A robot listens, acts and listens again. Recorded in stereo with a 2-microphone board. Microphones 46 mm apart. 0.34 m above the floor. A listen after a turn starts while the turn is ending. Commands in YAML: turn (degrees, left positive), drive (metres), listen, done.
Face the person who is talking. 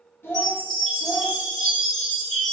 turn: 65
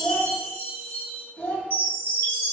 turn: 30
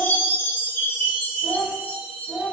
turn: 15
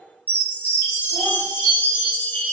listen: true
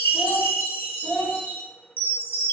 done: "Found it: a child speaking, straight ahead, under 1 m away."